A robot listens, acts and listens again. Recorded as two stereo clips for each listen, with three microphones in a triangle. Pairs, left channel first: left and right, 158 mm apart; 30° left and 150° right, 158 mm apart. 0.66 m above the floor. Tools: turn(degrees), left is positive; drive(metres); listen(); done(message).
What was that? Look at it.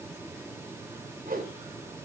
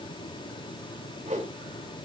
turn(degrees=-110)
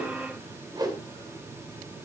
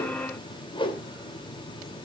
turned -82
turn(degrees=-25)
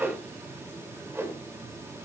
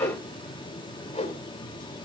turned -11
turn(degrees=-15)
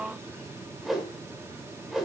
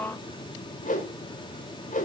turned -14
done("Facing the whoosh.")